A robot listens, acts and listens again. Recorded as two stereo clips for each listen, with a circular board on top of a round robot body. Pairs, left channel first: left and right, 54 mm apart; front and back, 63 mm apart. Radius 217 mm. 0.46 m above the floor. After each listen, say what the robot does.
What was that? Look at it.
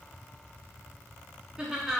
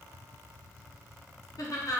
Turn 10° right.
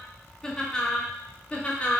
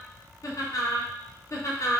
Turn 30° left.
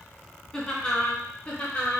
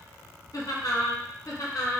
Turn 25° left.
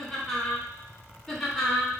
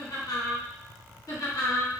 Turn 10° left.
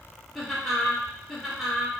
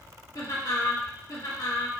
Found it: laughter, straight ahead, 1 to 2 m away.